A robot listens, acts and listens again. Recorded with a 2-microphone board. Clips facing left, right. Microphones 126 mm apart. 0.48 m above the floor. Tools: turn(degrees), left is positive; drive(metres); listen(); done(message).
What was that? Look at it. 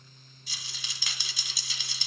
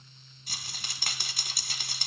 turn(degrees=-50)
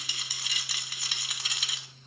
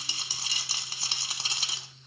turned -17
turn(degrees=-30)
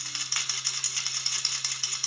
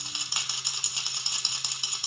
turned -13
turn(degrees=-20)
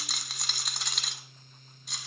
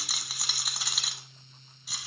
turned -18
done("Found it: a rattle, straight ahead.")